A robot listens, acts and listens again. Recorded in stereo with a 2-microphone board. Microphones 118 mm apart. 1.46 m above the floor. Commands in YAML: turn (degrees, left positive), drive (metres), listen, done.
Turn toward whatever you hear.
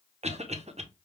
turn: -70
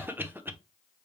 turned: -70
turn: -20
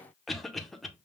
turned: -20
done: "Found it: a cough, straight ahead."